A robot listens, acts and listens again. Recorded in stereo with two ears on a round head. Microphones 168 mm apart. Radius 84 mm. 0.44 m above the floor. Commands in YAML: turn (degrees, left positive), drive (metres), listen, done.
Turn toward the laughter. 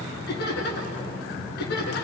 turn: 55
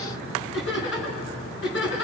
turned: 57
turn: 70
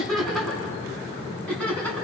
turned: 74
turn: 10
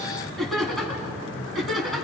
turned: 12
done: "Found it: laughter, straight ahead."